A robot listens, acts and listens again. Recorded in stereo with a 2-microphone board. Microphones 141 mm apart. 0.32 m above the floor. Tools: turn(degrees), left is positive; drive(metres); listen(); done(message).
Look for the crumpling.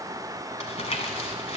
turn(degrees=50)
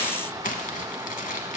turn(degrees=80)
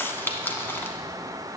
turn(degrees=15)
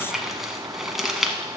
done("Found it: crumpling, straight ahead, under 1 m away.")